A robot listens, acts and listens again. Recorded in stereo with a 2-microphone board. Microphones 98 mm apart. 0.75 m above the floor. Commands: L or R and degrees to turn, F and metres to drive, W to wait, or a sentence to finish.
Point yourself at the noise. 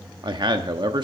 R50
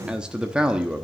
R10
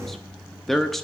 Found it: a man speaking, straight ahead, under 1 m away.